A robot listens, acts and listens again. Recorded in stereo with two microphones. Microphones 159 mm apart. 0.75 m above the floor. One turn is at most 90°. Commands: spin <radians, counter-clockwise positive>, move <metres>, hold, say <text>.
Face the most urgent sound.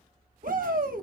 spin -1.13
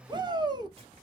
spin -0.52
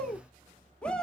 spin 0.17
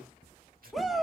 say Facing the shout, under 1 m away.